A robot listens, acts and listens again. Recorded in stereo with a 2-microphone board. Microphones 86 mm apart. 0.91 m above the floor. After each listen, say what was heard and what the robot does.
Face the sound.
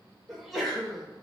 Turn 30° left.
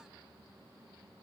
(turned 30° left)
Keep listening.
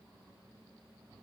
I heard a sneeze, but can't make it out now. It was about 30° right or 150° left.